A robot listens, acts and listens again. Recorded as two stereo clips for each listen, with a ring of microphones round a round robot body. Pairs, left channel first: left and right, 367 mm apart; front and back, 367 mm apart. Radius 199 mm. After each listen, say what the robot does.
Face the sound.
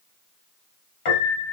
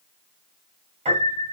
Turn 105° left.
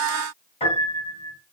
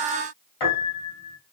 Turn 15° left.
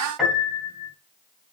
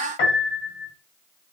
Found it: a piano, straight ahead, 2 to 4 m away.